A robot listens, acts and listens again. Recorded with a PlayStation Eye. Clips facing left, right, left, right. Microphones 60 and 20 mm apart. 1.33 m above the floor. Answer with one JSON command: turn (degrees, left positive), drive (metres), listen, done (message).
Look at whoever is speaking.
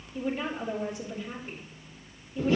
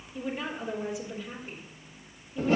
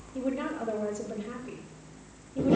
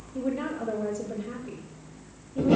{"turn": -15}
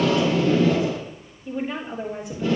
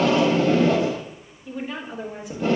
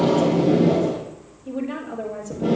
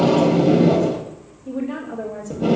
{"done": "Facing the woman speaking."}